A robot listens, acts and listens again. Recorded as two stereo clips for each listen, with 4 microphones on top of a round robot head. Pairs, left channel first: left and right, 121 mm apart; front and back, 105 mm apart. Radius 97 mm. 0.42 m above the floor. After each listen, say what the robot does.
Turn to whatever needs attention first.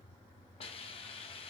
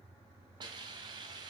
Keep listening.
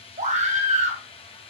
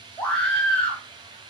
Turn 80° right.
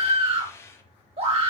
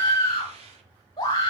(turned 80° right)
Turn 55° right.
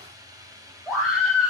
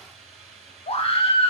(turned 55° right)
Facing the scream.